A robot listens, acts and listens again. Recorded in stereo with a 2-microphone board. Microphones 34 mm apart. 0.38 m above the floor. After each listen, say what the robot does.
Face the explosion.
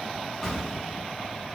Turn 15° left.
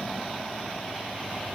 Keep listening.
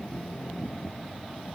I heard an explosion, but can't make it out now. It was about straight ahead or 150° left.